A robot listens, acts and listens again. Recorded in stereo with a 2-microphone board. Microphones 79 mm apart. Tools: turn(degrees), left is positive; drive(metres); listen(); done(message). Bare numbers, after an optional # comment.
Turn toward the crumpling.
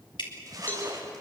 # The crumpling: about 45° right or 135° right.
turn(-45)
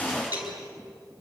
listen()
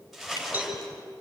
done("Facing the crumpling, over 4 m away.")